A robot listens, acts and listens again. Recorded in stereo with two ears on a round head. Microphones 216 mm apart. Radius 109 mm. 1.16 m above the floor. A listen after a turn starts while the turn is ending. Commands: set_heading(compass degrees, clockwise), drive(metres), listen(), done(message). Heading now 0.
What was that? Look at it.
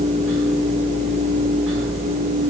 listen()
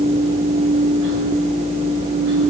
listen()
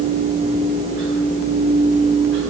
done("I can't make out anything.")